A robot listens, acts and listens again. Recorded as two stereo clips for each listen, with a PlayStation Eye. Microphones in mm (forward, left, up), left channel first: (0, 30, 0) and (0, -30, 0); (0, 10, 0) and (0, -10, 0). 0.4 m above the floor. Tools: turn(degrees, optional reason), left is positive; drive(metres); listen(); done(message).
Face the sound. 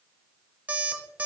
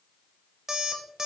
turn(degrees=-25, reason="The alarm clock: about 25° right or 155° right.")
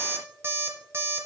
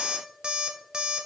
turn(degrees=-130, reason="So it is at 130° right.")
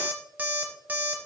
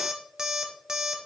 turn(degrees=-30, reason="The alarm clock is now 30° right.")
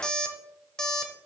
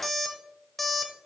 turn(degrees=10, reason="The alarm clock is now 10° left.")
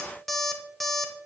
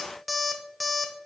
done("Facing the alarm clock.")